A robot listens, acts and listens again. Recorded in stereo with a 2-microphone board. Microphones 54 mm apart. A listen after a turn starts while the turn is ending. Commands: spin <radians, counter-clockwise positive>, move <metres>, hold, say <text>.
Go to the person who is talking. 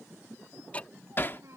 spin -1.05
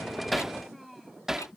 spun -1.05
move 1.0
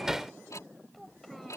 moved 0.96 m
move 1.0
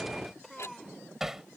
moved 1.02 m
move 1.0
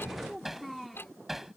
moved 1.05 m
move 1.0
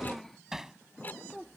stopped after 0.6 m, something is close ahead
say Arrived at the child speaking, straight ahead.